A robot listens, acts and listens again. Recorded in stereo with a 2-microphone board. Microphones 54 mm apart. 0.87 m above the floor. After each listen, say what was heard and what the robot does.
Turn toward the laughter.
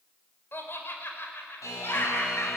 The laughter: about 40° left or 140° left. Turn 40° left.
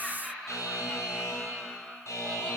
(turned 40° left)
Facing the laughter.